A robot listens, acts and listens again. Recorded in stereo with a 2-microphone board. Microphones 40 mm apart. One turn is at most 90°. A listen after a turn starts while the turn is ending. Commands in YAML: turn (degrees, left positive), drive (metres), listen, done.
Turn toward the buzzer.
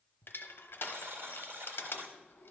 turn: -90
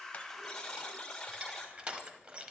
turn: 10
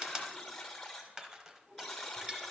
done: "Facing the buzzer."